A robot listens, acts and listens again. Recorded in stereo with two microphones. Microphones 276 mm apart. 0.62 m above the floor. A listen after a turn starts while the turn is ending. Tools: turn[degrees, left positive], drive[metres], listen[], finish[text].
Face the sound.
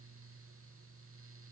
Action: listen[]
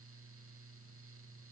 Action: listen[]
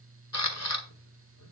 Thought: The camera shutter: about 70° left or 110° left.
Action: turn[70]
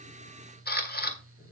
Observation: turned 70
Thought: So it is at 35° left.
Action: turn[35]
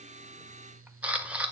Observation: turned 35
Action: finish[Facing the camera shutter, 1 to 2 m away.]